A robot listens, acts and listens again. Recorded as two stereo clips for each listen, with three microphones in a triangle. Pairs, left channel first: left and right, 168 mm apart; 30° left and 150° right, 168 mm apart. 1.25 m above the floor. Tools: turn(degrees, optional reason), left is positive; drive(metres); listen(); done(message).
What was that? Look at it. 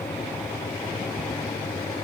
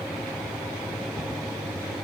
listen()
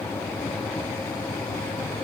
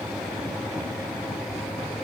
listen()
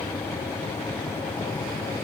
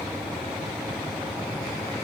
done("I can't make out anything to turn to.")